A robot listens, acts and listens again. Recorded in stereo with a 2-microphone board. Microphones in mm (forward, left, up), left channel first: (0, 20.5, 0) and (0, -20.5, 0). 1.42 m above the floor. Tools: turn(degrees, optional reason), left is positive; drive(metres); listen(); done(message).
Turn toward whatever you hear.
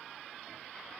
listen()
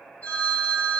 turn(degrees=60, reason="The phone ringing: about 60° left or 120° left.")
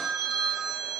turn(degrees=20, reason="So it is at 20° left.")
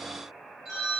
done("Found it: a phone ringing, straight ahead.")